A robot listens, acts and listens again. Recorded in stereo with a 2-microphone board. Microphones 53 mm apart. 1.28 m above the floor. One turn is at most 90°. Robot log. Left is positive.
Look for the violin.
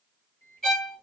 cmd yaw +30
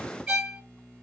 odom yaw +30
note: So it is at 20° right.
cmd yaw -20
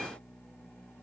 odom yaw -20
cmd idle
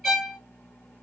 end: Facing the violin, 1 to 2 m away.